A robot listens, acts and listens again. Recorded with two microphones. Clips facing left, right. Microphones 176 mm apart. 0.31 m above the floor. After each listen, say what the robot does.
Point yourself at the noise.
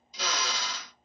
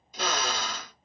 Turn 55° right.
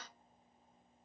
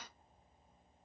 Keep listening.
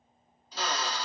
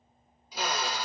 Turn 10° right.
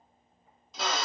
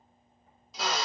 Facing the drill, under 1 m away.